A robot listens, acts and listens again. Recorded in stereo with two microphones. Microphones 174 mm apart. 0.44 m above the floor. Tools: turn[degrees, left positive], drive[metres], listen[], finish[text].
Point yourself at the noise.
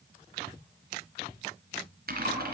Thought: The typing on a keyboard: about 65° right or 115° right.
Action: turn[-65]
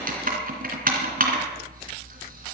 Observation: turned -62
Thought: So it is at 55° right.
Action: turn[-55]
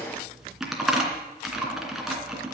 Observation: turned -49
Action: finish[Facing the typing on a keyboard, 2 to 4 m away.]